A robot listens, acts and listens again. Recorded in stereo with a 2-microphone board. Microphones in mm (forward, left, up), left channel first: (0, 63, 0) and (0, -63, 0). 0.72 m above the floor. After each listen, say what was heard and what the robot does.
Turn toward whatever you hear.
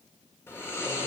The snoring: about 20° left or 160° left. Turn 20° left.
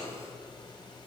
So it is at 140° left. Turn 140° left.
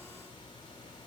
The snoring is now 40° left. Turn 40° left.
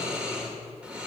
The snoring is now 10° right. Turn 10° right.
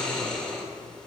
Facing the snoring.